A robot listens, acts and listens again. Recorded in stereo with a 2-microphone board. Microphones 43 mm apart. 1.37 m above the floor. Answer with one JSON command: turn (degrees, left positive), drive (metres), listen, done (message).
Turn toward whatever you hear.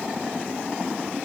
{"listen": true}
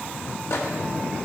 {"turn": 90}
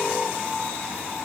{"listen": true}
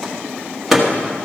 {"done": "Facing the microwave."}